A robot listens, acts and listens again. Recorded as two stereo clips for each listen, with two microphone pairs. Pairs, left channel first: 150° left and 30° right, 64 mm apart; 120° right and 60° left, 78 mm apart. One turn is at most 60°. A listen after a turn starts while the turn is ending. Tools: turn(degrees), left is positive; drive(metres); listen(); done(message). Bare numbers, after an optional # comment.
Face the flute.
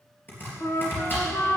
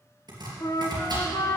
# The flute: 160° right.
turn(-60)
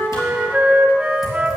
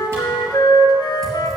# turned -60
# The flute is now 100° right.
turn(-60)
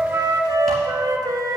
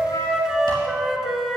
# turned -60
# The flute is now 25° right.
turn(-25)
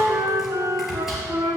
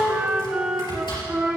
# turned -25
# The flute is now 15° right.
turn(-15)
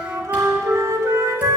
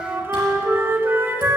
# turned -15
done("Found it: a flute, straight ahead, 1 to 2 m away.")